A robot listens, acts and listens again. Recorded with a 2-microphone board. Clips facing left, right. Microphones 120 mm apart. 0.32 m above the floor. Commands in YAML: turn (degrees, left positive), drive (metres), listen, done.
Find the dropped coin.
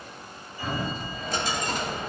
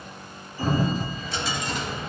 turn: 45
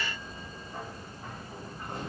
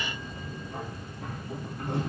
listen: true
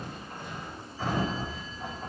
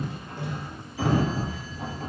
done: "I heard a dropped coin, but can't make it out now. It was about straight ahead or 90° left."